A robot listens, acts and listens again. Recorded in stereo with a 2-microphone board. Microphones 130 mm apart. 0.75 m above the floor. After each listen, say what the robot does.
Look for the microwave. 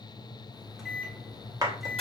Turn 30° left.
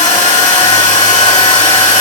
Keep listening.
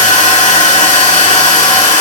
Keep listening.
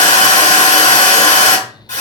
I heard a microwave, but can't make it out now. It was about 30° right or 150° left.